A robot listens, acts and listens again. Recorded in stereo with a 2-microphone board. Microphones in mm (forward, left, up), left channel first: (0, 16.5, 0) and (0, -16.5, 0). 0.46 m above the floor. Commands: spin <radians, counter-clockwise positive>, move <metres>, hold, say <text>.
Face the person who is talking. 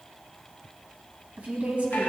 spin -0.61
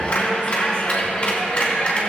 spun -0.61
hold
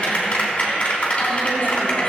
hold
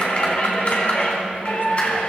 say I heard a woman speaking, but can't make it out now. It was about straight ahead or 110° right.